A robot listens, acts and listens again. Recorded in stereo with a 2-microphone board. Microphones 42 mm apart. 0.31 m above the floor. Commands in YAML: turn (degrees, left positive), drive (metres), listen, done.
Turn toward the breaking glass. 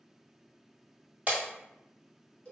turn: -40
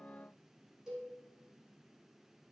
listen: true
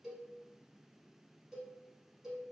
done: "I heard breaking glass, but can't make it out now. It was about straight ahead or 100° right."